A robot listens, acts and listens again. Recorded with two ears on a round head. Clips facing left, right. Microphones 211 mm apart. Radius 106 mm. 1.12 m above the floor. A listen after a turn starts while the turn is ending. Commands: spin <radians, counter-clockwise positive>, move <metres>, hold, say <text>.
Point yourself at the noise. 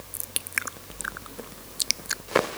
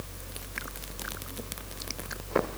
hold
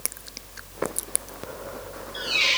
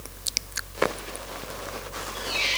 spin 1.57
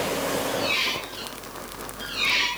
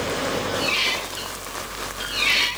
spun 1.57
spin -0.26
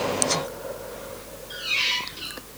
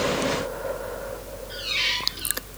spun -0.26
say Facing the squeak, 2 to 4 m away.